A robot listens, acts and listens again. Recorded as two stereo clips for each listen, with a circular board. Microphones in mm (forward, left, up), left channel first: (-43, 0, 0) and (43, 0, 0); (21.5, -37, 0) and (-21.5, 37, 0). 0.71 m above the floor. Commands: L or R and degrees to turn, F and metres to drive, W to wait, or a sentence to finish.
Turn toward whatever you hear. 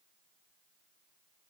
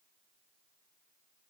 W
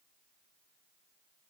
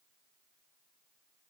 W
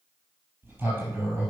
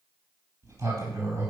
L70
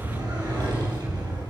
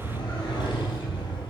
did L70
R30
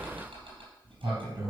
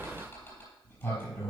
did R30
L10
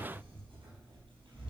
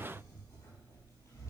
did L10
Found it: a sliding door, straight ahead.